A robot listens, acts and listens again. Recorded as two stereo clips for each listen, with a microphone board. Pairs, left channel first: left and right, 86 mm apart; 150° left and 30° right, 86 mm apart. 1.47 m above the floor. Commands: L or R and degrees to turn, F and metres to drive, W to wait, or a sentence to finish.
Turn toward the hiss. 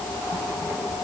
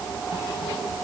W
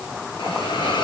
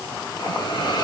L115
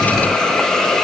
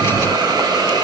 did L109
Found it: a hiss, straight ahead.